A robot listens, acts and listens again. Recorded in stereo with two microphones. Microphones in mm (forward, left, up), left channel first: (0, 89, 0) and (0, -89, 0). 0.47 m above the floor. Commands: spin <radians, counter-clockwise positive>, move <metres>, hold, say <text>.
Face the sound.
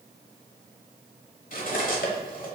spin 0.96
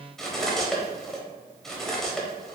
say Facing the cutlery clinking.